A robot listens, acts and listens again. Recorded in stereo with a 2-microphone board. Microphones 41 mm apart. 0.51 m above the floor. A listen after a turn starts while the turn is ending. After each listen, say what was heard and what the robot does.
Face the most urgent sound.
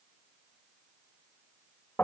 Keep listening.
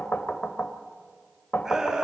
Turn 30° right.
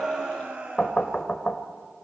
So it is at 140° right. Turn 140° right.
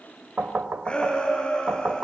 The shout is now 25° left. Turn 25° left.
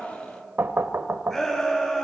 Facing the shout, over 4 m away.